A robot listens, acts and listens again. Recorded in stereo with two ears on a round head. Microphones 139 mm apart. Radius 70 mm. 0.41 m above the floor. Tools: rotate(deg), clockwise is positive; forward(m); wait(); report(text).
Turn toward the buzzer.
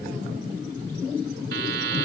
rotate(75)
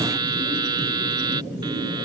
rotate(30)
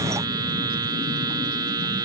rotate(25)
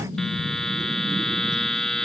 report("Found it: a buzzer, straight ahead.")